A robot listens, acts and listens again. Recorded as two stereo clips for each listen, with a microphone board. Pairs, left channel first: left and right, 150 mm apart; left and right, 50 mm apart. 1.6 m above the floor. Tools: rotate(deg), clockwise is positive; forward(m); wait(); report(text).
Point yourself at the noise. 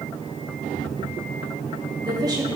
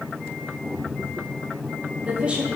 rotate(25)
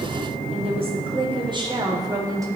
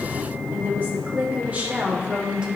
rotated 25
rotate(20)
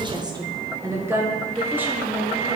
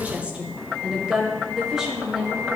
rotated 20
rotate(30)
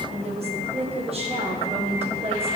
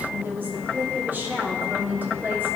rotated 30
rotate(140)
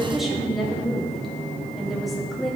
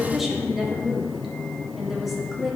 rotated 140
report("Facing the woman speaking.")